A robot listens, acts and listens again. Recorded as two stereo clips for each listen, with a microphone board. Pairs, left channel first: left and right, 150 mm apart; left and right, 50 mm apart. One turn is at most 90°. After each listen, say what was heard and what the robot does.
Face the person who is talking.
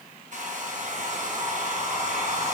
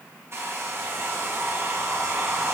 Keep listening.
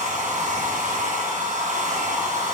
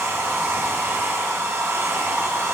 Keep listening.
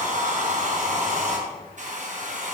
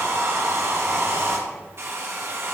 I can't make out anyone speaking, only a hair dryer.